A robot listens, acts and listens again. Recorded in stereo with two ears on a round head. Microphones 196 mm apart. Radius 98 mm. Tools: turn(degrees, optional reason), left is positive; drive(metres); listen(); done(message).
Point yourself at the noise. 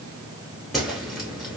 turn(degrees=30)
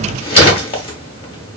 turn(degrees=150, reason="So it is at 150° left.")
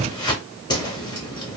turn(degrees=25, reason="The whoosh is now 25° left.")
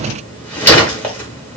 turn(degrees=10, reason="The whoosh is now 10° left.")
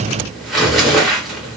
done("Found it: a whoosh, straight ahead, under 1 m away.")